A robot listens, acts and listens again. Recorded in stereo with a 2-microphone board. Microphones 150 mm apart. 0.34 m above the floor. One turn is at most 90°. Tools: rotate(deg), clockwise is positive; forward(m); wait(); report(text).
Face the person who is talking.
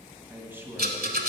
rotate(30)
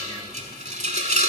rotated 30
wait()
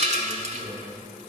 rotate(90)
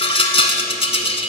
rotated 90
rotate(40)
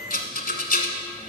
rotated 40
wait()
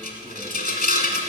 report("I heard a man speaking from this way, but can't make it out now.")